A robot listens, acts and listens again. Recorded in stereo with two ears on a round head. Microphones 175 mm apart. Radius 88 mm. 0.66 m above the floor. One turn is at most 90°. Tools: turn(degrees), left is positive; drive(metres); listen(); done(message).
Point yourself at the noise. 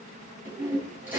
turn(degrees=-30)
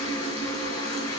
turn(degrees=25)
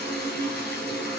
done("Found it: a toilet flushing, straight ahead.")